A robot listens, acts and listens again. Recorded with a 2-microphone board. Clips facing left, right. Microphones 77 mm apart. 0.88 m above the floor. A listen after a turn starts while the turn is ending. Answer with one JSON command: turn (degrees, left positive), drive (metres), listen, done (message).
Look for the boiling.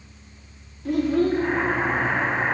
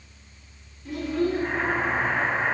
{"turn": 90}
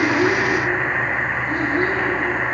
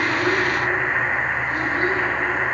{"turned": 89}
{"done": "Found it: boiling, straight ahead."}